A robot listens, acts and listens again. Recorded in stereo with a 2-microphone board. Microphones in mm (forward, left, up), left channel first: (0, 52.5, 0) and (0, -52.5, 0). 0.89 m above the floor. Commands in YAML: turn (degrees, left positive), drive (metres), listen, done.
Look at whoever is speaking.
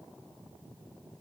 listen: true
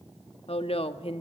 turn: 70
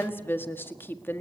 turn: 20
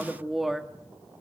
done: "Facing the woman speaking."